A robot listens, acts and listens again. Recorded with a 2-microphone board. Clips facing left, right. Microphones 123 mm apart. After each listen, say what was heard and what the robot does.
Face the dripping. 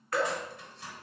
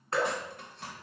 The dripping: about 30° right or 150° right. Turn 30° right.
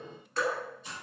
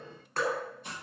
So it is at 125° right. Turn 125° right.
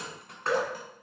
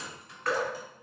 The dripping is now 30° left. Turn 30° left.
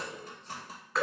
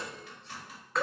Facing the dripping.